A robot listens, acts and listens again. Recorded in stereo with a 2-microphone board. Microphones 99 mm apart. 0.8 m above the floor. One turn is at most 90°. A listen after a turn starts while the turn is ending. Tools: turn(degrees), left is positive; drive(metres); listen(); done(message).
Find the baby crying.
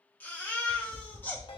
turn(degrees=20)
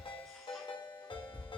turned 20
listen()
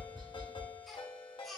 done("Found it: a baby crying, straight ahead.")